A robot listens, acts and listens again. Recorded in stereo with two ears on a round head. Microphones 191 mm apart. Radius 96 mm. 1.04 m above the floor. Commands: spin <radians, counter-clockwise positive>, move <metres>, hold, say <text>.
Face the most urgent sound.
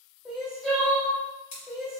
spin 0.52
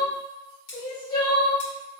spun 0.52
spin 2.62
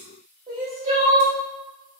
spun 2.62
spin -0.61
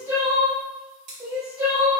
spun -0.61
spin -0.26
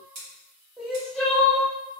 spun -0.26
say Found it: crying, straight ahead.